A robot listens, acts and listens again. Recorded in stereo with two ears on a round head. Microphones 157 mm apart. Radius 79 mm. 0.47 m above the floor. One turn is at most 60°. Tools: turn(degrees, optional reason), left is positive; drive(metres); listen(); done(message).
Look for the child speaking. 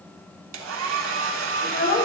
turn(degrees=45, reason="The child speaking: about 45° left or 135° left.")
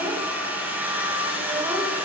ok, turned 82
listen()
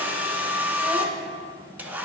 listen()
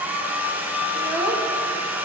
turn(degrees=-20, reason="So it is at 20° right.")
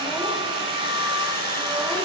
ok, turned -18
listen()
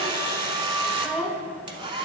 done("Facing the child speaking, under 1 m away.")